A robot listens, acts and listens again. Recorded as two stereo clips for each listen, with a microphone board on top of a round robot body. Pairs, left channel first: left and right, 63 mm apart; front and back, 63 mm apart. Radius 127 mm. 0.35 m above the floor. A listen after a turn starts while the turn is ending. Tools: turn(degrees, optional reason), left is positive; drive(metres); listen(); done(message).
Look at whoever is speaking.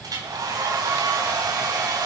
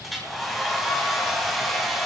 listen()
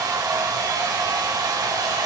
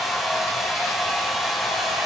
listen()
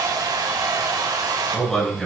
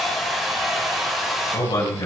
done("Facing the man speaking.")